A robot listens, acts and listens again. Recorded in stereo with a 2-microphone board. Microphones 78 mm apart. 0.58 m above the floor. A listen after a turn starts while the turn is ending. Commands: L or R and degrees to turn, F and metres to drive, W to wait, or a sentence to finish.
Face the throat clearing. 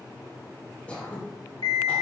L15
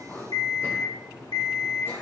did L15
W
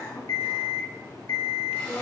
L150
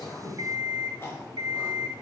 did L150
L30
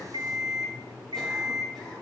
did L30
W
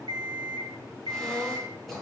Facing the throat clearing.